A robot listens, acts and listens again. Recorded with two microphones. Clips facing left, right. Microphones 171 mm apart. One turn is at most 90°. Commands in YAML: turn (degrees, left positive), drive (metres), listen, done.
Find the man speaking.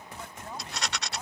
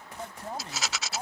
turn: -40
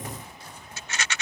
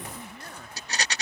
listen: true
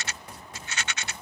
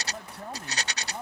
turn: -90
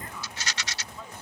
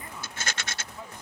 turn: -15
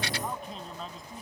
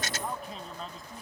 done: "Facing the man speaking."